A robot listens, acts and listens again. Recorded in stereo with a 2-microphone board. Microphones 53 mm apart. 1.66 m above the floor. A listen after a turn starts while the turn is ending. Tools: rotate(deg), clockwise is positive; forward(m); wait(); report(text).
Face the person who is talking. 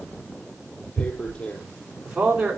rotate(15)
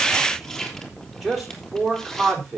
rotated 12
report("Found it: a man speaking, straight ahead.")